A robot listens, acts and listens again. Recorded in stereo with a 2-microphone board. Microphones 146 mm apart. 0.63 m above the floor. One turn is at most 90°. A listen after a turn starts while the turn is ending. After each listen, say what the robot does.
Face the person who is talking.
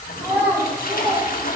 Turn 20° right.
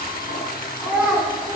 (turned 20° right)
Turn 30° right.
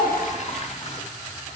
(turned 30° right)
Keep listening.
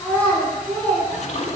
Turn 10° left.
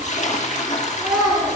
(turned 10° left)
Found it: a child speaking, straight ahead.